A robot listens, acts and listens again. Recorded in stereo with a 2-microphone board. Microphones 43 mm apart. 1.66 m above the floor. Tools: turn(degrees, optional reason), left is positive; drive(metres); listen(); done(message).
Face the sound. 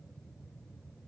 listen()
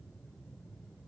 listen()
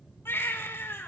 turn(degrees=65, reason="The baby crying: about 65° left or 115° left.")
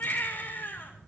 turn(degrees=50, reason="So it is at 50° left.")
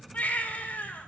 turn(degrees=40, reason="The baby crying is now 40° left.")
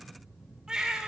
turn(degrees=-15, reason="The baby crying is now 15° right.")
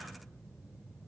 listen()
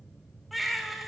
done("Facing the baby crying.")